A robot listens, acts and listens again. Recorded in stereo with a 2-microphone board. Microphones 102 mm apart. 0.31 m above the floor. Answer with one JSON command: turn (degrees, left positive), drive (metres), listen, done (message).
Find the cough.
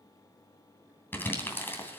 {"listen": true}
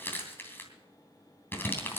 {"listen": true}
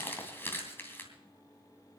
{"done": "I can't make out a cough, only crumpling."}